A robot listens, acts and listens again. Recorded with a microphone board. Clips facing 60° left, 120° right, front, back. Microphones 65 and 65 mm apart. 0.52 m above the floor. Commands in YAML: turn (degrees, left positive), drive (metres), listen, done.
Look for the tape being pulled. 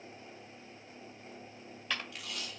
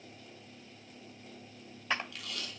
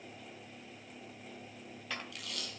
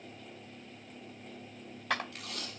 turn: 125
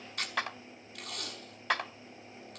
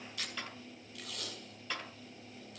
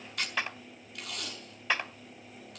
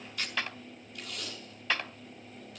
turn: 25
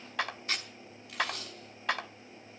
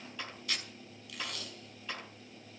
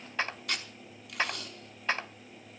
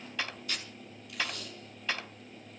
done: "Facing the tape being pulled."